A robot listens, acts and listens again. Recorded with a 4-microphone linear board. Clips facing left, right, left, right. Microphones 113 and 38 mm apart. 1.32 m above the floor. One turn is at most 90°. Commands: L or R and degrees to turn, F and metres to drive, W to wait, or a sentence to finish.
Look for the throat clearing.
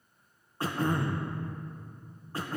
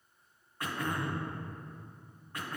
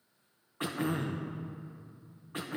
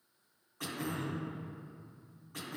L30
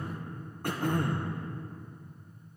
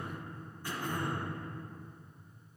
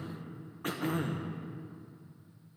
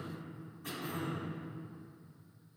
L90
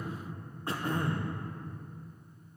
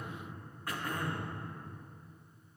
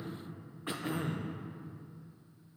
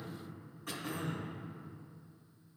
L30
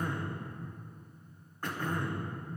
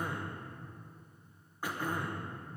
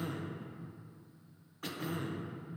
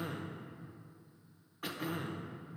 R10
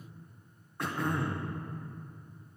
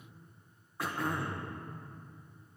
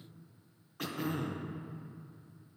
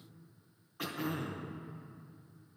Found it: throat clearing, straight ahead.